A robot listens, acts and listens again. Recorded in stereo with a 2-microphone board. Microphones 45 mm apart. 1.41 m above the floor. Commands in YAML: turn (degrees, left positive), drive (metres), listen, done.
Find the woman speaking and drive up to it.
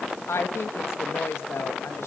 turn: 90
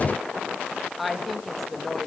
drive: 1.0
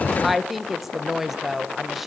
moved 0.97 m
drive: 1.0
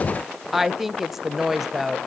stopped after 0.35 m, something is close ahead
done: "I am next to the woman speaking."